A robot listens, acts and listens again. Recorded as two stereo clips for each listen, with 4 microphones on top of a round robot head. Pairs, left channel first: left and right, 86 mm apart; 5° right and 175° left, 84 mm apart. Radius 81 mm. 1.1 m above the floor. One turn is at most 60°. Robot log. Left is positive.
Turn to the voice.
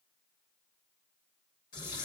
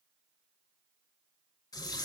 cmd idle
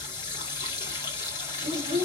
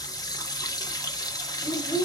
note: The child speaking: 40° right.
cmd yaw -40
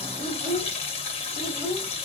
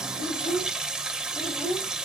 end: Facing the child speaking.